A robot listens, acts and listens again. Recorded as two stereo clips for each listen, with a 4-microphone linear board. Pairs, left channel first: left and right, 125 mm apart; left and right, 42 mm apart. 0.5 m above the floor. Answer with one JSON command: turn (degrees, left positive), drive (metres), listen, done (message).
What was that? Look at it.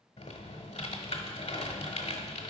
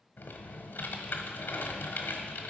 {"turn": 65}
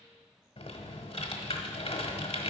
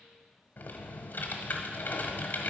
{"turn": 55}
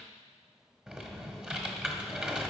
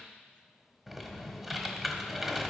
{"turn": -10}
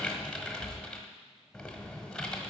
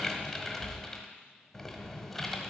{"done": "Found it: typing on a keyboard, straight ahead."}